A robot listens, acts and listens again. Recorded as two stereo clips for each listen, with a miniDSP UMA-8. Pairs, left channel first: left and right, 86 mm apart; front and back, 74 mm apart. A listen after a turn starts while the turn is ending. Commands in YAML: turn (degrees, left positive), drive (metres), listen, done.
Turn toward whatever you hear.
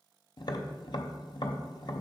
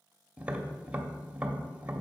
turn: 110
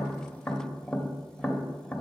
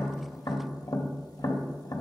turn: 10
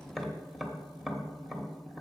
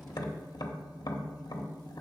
done: "Found it: tapping, straight ahead, 1 to 2 m away."